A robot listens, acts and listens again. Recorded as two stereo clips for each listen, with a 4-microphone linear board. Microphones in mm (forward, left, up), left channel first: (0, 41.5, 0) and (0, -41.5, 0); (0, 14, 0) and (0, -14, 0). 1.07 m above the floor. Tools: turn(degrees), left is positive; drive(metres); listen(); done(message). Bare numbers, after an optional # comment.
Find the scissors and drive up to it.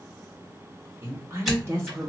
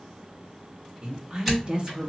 turn(30)
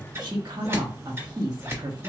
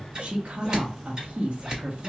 # So it is at 30° right.
turn(-30)
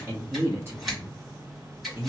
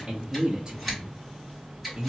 drive(1.0)
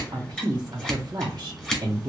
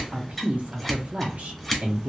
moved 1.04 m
drive(1.0)
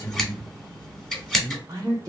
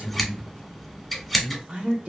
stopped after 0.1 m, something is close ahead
done("I am next to the scissors.")